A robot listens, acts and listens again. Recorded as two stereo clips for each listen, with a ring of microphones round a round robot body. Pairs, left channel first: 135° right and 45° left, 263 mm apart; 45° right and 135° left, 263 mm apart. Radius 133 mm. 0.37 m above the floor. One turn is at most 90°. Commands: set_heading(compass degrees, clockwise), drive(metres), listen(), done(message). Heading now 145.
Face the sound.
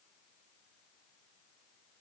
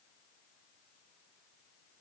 listen()
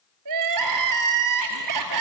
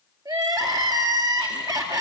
set_heading(85)
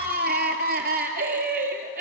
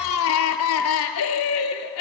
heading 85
set_heading(95)
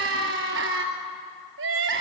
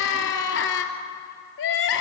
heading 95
done("Facing the crying, 2 to 4 m away.")